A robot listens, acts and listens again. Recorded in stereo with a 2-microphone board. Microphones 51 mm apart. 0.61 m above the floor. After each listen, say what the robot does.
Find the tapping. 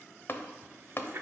Turn 45° left.
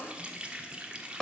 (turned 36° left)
Turn 10° left.
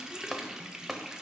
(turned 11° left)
Facing the tapping.